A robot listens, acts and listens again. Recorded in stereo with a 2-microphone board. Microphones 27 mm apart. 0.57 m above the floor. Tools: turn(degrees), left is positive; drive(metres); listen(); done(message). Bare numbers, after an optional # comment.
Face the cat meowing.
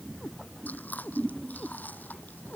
# The cat meowing: about 30° left or 150° left.
turn(30)
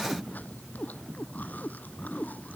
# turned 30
# So it is at 125° left.
turn(125)
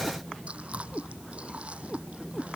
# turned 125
# The cat meowing is now 15° left.
turn(15)
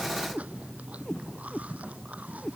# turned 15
# The cat meowing is now 10° left.
turn(10)
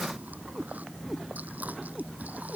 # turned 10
done("Facing the cat meowing.")